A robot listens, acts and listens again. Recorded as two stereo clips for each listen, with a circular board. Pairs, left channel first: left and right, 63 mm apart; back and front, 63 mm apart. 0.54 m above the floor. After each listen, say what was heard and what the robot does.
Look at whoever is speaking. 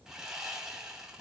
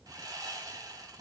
Keep listening.
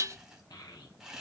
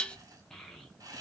The child speaking: 100° left. Turn 100° left.
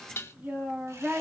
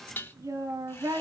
The child speaking is now 25° right. Turn 25° right.
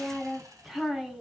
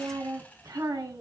Facing the child speaking.